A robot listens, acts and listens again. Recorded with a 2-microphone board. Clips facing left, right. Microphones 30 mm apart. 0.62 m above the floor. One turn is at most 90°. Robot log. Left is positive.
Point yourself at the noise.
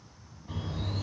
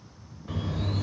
note: The bird: about 70° right or 110° right.
cmd yaw -70
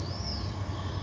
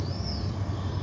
end: Found it: a bird, straight ahead.